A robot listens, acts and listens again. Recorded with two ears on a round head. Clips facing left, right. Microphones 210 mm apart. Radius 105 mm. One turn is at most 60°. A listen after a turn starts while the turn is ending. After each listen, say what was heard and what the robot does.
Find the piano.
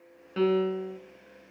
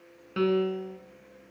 Turn 30° right.
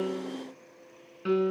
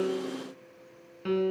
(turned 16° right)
So it is at 10° left. Turn 10° left.
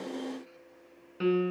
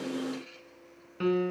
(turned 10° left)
Facing the piano, 1 to 2 m away.